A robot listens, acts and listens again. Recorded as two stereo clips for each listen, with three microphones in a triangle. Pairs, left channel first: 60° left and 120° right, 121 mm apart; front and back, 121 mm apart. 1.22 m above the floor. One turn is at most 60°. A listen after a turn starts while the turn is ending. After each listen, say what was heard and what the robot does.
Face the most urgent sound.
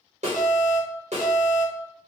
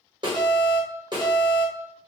The alarm: 55° left. Turn 55° left.
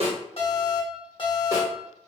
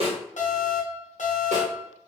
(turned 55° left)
The alarm is now 10° left. Turn 10° left.
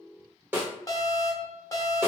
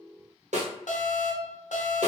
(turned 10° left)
Found it: an alarm, straight ahead.